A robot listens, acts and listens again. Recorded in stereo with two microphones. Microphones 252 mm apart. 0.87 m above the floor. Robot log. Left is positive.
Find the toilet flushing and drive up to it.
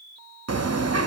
cmd idle
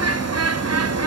cmd idle
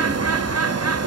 end: I can't make out a toilet flushing, only a bird.